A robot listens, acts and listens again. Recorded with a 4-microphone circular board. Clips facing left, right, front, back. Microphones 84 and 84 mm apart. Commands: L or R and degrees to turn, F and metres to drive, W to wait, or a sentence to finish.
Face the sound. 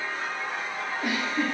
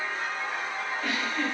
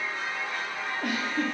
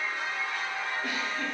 L15
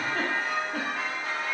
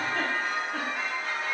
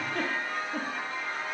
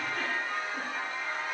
Found it: a giggle, straight ahead, under 1 m away.